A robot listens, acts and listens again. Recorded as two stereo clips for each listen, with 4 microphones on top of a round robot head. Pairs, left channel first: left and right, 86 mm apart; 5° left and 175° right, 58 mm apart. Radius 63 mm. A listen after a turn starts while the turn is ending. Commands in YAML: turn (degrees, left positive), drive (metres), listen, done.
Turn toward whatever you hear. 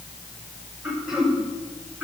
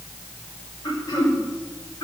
done: "Found it: throat clearing, straight ahead."